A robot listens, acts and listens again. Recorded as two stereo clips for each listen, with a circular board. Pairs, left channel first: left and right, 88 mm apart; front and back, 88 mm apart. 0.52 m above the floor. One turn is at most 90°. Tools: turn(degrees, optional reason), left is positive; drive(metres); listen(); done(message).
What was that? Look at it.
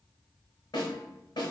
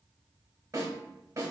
turn(degrees=90, reason="The snare drum: 125° left.")
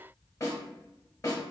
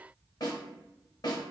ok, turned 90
turn(degrees=35, reason="The snare drum is now 35° left.")
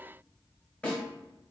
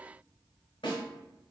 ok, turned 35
turn(degrees=15, reason="The snare drum is now 15° left.")
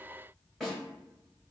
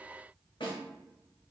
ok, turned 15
done("Found it: a snare drum, straight ahead.")